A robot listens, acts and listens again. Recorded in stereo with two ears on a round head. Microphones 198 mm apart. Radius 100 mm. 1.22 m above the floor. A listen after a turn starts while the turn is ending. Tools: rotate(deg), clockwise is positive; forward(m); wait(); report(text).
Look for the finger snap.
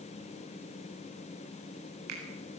rotate(90)
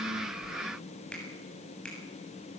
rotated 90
report("Found it: a finger snap, straight ahead.")